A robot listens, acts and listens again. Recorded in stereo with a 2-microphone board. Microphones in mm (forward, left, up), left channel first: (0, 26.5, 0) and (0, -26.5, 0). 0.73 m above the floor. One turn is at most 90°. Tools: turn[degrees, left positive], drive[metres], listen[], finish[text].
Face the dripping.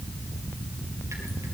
Action: listen[]
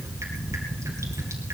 Action: listen[]
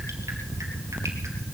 Action: finish[I can't make out dripping.]